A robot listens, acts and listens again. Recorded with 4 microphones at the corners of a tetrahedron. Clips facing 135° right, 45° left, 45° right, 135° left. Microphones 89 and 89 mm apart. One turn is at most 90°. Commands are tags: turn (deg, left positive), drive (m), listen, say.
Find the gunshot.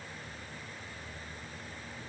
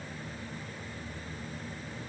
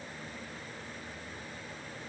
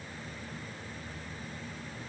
<listen/>
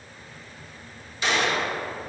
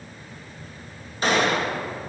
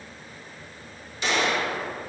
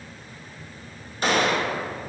<turn deg="90"/>
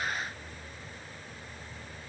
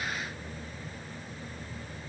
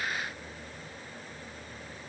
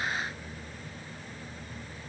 <say>Facing where the gunshot came from. I can't hear it now.</say>